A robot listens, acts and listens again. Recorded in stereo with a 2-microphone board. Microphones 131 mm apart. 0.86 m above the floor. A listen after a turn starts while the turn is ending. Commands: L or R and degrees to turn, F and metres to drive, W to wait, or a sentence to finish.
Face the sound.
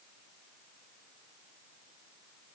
W
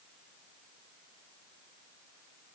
W
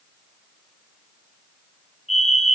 L60
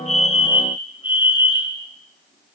L50
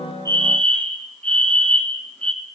L10
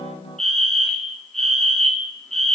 Facing the fire alarm, 2 to 4 m away.